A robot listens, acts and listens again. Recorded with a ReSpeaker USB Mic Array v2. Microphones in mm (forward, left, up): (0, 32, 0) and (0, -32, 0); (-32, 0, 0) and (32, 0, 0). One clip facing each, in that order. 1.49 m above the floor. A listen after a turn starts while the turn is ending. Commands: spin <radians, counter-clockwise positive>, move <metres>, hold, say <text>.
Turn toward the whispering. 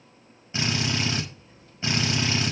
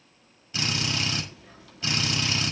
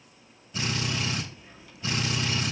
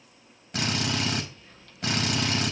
spin -1.75
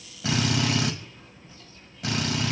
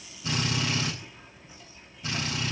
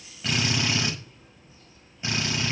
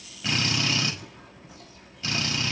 spin -0.26
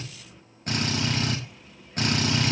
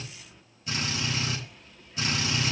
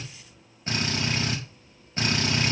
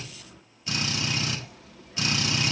say Found it: whispering, straight ahead.